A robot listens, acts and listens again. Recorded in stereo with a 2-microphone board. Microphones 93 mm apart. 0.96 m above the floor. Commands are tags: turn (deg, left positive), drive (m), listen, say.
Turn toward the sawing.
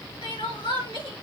<listen/>
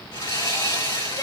<turn deg="55"/>
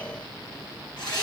<turn deg="65"/>
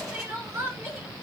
<listen/>
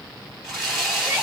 <say>Facing the sawing.</say>